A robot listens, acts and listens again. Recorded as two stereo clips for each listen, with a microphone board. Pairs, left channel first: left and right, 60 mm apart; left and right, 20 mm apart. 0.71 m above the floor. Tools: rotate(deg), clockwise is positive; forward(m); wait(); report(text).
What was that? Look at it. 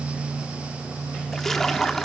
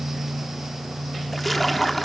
rotate(-30)
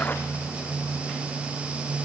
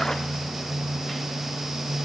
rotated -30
wait()
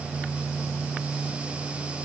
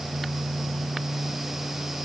report("I heard a splash, but can't make it out now. It was about 25° right or 145° left.")